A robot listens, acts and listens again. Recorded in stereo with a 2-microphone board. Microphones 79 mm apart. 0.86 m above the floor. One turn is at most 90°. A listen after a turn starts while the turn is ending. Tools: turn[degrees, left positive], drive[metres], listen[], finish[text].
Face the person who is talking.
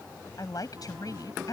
Thought: The woman speaking: about 50° left or 130° left.
Action: turn[50]
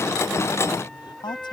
Thought: So it is at 75° left.
Action: turn[75]
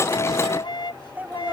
Thought: The woman speaking is now 20° right.
Action: turn[-20]
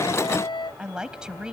Thought: The woman speaking is now 10° right.
Action: turn[-10]
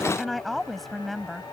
Action: finish[Found it: a woman speaking, straight ahead.]